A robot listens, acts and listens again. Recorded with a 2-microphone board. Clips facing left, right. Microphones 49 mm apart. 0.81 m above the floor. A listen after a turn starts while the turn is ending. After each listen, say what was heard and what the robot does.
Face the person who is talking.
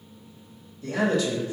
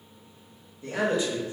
The man speaking: about 20° right or 160° right. Turn 20° right.
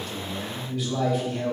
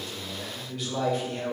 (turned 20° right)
Found it: a man speaking, straight ahead, 1 to 2 m away.